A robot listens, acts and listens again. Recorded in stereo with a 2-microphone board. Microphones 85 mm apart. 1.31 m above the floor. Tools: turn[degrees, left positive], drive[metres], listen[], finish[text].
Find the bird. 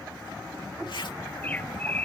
Thought: The bird: about 20° left or 160° left.
Action: turn[20]
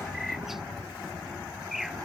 Action: finish[Found it: a bird, straight ahead.]